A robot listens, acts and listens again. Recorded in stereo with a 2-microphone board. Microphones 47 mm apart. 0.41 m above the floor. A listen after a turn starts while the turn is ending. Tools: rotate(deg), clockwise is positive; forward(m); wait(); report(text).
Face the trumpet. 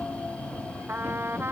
rotate(55)
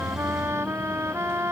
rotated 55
rotate(70)
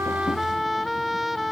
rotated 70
report("Found it: a trumpet, straight ahead.")